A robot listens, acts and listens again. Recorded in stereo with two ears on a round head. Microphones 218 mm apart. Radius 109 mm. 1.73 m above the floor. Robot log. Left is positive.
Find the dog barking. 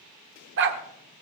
note: The dog barking: about 50° right or 130° right.
cmd yaw -50
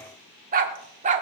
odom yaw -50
note: So it is at 30° right.
cmd yaw -30
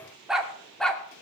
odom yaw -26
end: Found it: a dog barking, straight ahead.